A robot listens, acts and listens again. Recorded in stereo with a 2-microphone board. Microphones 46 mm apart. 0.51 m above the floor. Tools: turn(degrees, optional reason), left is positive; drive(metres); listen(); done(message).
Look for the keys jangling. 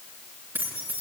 turn(degrees=-45, reason="The keys jangling: about 45° right or 135° right.")
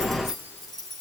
turn(degrees=10, reason="So it is at 10° left.")
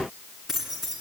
done("Found it: keys jangling, straight ahead.")